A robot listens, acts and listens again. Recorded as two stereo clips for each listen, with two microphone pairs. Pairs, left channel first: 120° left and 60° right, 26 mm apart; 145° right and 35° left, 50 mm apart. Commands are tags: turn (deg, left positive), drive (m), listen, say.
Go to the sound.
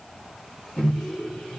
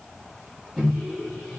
<turn deg="105"/>
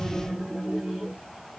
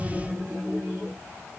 <drive m="1.0"/>
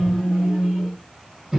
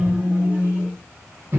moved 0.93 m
<turn deg="-10"/>
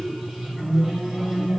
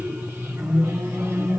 <drive m="1.0"/>
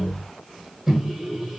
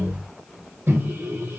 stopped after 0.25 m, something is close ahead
<say>Arrived at the microwave, straight ahead.</say>